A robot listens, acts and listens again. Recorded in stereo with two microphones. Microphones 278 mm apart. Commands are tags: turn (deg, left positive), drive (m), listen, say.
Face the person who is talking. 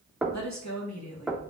<turn deg="90"/>
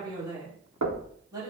<turn deg="-15"/>
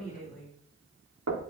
<say>Facing the woman speaking.</say>